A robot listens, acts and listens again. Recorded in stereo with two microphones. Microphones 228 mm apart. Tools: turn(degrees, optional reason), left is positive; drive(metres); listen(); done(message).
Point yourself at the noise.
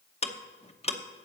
turn(degrees=25, reason="The ticking: about 25° left or 155° left.")
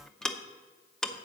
done("Found it: ticking, straight ahead, under 1 m away.")